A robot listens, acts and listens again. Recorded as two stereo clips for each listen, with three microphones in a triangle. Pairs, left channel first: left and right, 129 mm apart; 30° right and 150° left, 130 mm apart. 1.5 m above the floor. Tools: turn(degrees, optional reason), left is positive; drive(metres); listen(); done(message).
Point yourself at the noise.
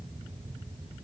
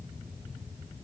listen()
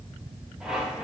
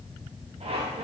turn(degrees=-175, reason="The squeak: 175° right.")
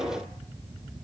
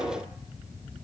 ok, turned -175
listen()
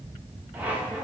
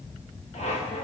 turn(degrees=-10, reason="The squeak is now 10° right.")
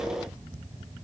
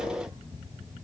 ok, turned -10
listen()
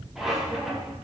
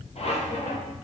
done("Facing the squeak, 1 to 2 m away.")